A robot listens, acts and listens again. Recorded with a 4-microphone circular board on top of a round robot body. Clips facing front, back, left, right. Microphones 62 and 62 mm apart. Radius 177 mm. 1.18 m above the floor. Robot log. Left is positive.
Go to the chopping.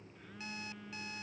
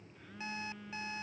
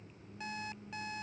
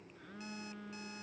cmd idle
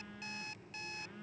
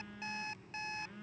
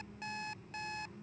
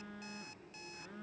cmd idle
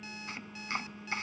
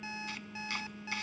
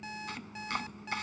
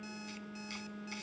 note: The chopping: 60° left.
cmd yaw +60
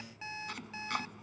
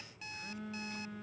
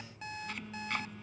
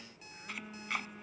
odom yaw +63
cmd fwd 1.0
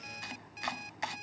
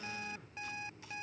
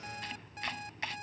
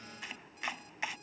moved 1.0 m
note: The chopping is now 10° right.
cmd yaw -10
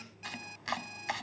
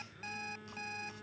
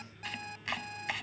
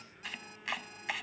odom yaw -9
cmd fwd 1.0
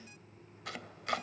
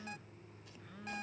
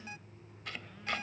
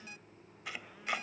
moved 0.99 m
note: The chopping is now 10° right.
cmd yaw -10
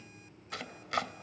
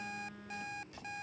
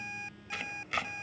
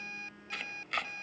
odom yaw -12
cmd fwd 1.0
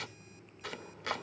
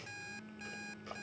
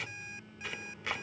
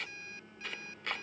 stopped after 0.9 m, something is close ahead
end: I am next to the chopping.